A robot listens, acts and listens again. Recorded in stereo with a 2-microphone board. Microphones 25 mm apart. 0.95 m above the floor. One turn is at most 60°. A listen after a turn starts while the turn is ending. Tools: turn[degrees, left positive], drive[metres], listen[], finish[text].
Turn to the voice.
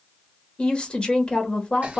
Thought: The woman speaking: about 35° left or 145° left.
Action: turn[35]
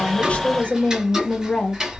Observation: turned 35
Thought: So it is at 105° left.
Action: turn[60]
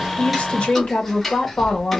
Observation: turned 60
Thought: The woman speaking is now 70° left.
Action: turn[60]
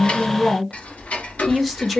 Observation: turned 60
Action: finish[Facing the woman speaking, 1 to 2 m away.]